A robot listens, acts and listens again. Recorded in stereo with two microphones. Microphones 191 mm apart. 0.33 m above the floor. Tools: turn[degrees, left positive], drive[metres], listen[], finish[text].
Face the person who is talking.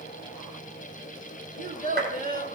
Thought: The child speaking: about 50° right or 130° right.
Action: turn[-50]
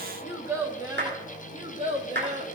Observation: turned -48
Thought: So it is at 40° right.
Action: turn[-40]
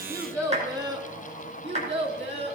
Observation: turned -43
Thought: The child speaking is now 30° right.
Action: turn[-30]
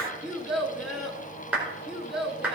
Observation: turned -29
Action: finish[Found it: a child speaking, straight ahead, 2 to 4 m away.]